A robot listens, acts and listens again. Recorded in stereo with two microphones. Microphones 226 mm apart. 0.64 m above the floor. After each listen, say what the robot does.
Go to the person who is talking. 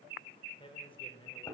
Turn 25° left.
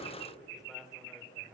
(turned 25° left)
Keep listening.
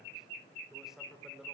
Drive 1.0 m forward.
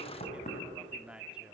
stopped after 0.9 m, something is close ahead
Arrived at the man speaking, straight ahead.